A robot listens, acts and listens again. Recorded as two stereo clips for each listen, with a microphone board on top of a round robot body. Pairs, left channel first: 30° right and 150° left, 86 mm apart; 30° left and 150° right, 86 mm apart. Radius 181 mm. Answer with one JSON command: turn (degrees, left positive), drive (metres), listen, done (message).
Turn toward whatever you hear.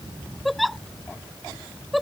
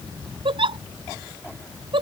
{"turn": -120}
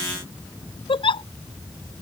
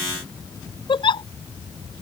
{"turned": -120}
{"done": "Found it: a giggle, straight ahead."}